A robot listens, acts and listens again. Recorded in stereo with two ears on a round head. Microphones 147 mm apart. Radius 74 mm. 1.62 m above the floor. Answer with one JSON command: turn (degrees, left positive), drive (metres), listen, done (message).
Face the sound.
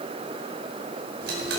{"turn": -70}
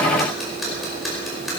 {"done": "Facing the ticking."}